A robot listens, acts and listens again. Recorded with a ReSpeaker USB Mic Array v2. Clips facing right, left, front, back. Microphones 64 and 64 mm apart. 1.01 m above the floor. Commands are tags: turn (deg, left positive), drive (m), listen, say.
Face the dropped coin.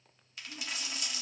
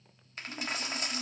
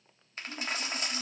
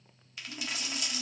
<turn deg="45"/>
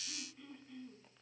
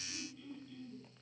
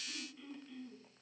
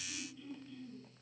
<say>Facing where the dropped coin came from. I can't hear it now.</say>